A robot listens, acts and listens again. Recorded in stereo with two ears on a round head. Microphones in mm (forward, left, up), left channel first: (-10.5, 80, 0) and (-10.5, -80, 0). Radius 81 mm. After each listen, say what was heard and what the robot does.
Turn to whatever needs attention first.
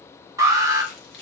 The alarm: about 20° right or 160° right. Turn 20° right.
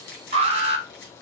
So it is at 140° right. Turn 140° right.
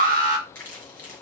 The alarm is now 55° right. Turn 55° right.
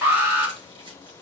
The alarm is now 10° right. Turn 10° right.
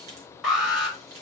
Found it: an alarm, straight ahead.